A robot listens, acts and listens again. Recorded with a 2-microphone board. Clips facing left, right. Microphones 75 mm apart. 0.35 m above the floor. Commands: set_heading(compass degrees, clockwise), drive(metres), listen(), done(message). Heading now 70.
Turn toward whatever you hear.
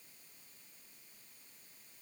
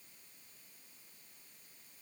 listen()
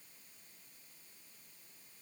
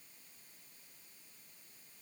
listen()
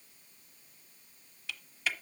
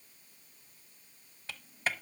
set_heading(105)
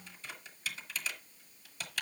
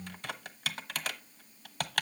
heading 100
set_heading(210)
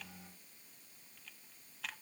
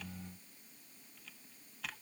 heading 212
listen()
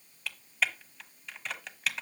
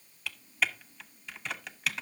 done("Found it: typing on a keyboard, straight ahead.")